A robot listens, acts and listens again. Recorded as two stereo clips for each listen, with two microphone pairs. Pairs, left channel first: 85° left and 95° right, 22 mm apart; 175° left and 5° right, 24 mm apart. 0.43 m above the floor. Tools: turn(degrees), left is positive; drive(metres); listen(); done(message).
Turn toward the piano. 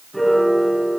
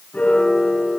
turn(degrees=175)
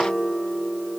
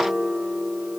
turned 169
done("Facing the piano, over 4 m away.")